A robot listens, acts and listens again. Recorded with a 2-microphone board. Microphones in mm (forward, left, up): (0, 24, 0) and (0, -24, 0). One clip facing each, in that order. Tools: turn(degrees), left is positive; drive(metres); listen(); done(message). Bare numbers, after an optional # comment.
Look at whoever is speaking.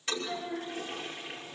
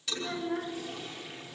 turn(-90)
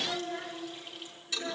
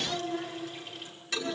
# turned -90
done("Found it: a child speaking, straight ahead.")